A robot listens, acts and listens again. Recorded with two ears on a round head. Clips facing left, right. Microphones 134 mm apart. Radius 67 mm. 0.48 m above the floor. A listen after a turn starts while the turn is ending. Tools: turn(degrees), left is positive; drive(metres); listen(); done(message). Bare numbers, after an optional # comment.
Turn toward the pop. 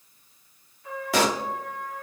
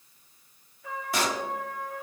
# The pop: about 55° left or 125° left.
turn(55)
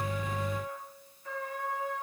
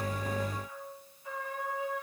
listen()
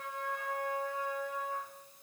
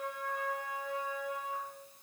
done("I heard a pop, but can't make it out now. It was about straight ahead or 70° left.")